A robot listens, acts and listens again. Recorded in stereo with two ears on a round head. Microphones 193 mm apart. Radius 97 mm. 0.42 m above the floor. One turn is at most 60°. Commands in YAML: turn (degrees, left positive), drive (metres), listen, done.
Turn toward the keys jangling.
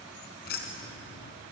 turn: 50
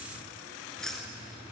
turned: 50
done: "Facing the keys jangling, over 4 m away."